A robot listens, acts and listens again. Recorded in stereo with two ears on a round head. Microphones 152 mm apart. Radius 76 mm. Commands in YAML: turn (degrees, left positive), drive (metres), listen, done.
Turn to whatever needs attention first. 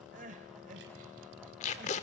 turn: -50
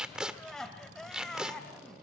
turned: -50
done: "Found it: crying, straight ahead, 1 to 2 m away."